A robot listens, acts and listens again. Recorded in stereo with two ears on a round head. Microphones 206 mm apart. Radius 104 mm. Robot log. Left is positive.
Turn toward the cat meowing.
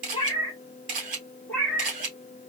cmd yaw +30
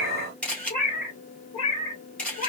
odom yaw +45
note: So it is at 150° left.
cmd yaw +150
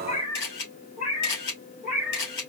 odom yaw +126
note: The cat meowing is now 35° left.
cmd yaw +35
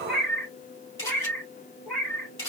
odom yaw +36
end: Found it: a cat meowing, straight ahead, 2 to 4 m away.